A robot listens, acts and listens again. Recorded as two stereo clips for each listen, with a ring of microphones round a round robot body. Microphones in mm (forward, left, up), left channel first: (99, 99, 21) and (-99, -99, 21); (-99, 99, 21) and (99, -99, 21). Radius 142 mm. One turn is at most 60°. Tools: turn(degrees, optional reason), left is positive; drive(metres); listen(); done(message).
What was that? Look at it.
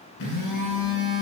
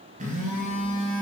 turn(degrees=20, reason="The phone buzzing: 20° left.")
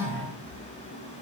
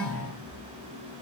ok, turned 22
done("Facing the phone buzzing.")